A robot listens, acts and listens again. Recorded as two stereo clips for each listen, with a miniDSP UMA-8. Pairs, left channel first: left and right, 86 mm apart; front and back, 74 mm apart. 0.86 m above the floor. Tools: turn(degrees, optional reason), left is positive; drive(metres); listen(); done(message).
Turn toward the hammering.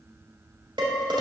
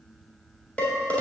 listen()
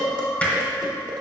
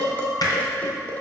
turn(degrees=15, reason="The hammering: 15° left.")
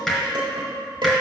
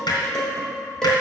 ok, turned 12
done("Facing the hammering.")